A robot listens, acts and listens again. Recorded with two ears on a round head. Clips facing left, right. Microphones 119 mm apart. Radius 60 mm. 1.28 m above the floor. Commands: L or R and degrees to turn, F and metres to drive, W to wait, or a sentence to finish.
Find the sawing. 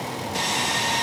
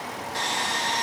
L20
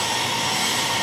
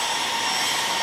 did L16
Found it: sawing, straight ahead, 1 to 2 m away.